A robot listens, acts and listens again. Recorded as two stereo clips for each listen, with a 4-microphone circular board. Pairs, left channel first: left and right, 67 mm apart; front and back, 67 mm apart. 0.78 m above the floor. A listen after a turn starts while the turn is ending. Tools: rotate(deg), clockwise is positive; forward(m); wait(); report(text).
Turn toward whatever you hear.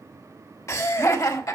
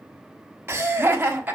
rotate(-120)
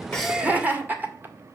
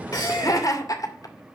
rotate(30)
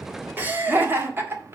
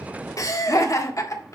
rotate(35)
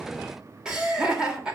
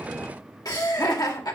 rotate(15)
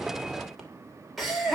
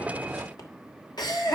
report("Found it: laughter, straight ahead, 2 to 4 m away.")